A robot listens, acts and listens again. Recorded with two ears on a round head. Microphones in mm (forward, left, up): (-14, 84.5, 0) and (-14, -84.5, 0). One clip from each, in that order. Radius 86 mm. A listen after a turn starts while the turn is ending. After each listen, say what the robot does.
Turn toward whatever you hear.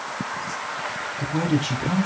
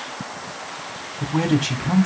Turn 15° right.
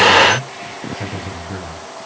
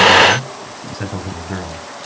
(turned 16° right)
Turn 150° right.
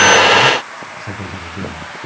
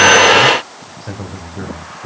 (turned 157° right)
Turn 15° left.
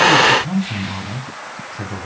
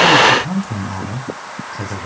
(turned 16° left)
Found it: a man speaking, straight ahead.